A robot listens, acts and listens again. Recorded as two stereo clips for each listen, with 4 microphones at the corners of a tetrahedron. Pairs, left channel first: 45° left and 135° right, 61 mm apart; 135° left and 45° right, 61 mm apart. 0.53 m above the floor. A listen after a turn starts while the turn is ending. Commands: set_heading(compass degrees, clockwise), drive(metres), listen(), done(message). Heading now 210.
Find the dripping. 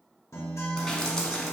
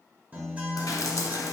set_heading(90)
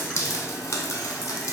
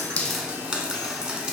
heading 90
set_heading(60)
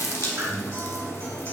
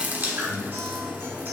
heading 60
done("Found it: dripping, straight ahead, under 1 m away.")